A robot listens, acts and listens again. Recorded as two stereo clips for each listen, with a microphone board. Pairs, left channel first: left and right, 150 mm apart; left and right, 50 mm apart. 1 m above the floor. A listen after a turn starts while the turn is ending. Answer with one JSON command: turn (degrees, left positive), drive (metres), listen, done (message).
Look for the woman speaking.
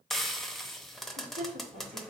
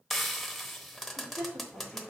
{"turn": -70}
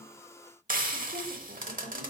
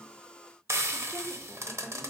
{"listen": true}
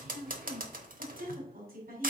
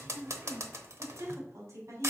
{"turn": -85}
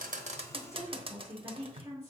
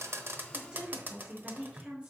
{"turn": -15}
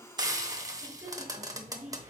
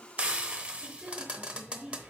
{"done": "Facing the woman speaking."}